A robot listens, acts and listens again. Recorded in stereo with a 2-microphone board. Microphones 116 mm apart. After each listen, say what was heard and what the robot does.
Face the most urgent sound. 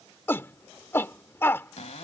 The shout: about 20° left or 160° left. Turn 20° left.
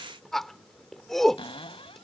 Facing the shout.